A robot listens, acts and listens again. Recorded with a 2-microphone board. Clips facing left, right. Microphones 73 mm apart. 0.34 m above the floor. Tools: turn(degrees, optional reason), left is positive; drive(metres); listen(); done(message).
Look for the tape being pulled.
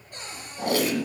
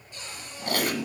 turn(degrees=70, reason="The tape being pulled: about 70° left or 110° left.")
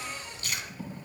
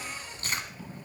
turn(degrees=35, reason="So it is at 35° left.")
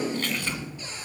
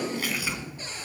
done("Found it: tape being pulled, straight ahead.")